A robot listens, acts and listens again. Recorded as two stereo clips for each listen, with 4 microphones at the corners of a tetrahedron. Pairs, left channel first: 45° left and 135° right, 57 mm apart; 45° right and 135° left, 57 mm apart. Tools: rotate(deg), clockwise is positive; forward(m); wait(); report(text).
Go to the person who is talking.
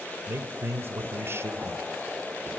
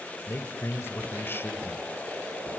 rotate(90)
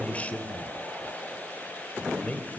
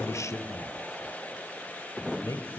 rotate(20)
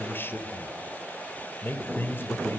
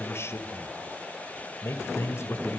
forward(1.0)
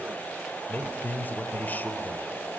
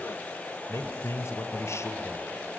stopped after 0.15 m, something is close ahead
rotate(15)
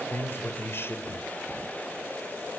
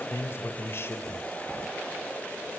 report("Something is in my way. I am facing the man speaking but have not reached it.")